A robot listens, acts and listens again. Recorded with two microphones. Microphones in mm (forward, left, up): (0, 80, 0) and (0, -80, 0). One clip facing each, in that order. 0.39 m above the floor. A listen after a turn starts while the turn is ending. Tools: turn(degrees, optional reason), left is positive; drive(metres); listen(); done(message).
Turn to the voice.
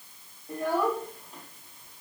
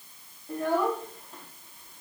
turn(degrees=30)
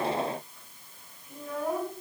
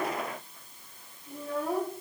turn(degrees=-30, reason="So it is at 30° right.")
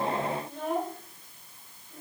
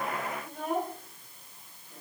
turn(degrees=-10, reason="The child speaking is now 10° right.")
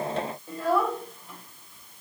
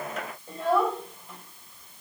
done("Facing the child speaking.")